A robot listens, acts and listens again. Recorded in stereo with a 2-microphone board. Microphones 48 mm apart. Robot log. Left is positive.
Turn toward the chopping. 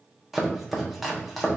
cmd yaw -30
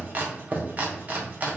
note: So it is at 145° right.
cmd yaw -145
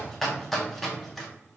end: Found it: chopping, straight ahead, under 1 m away.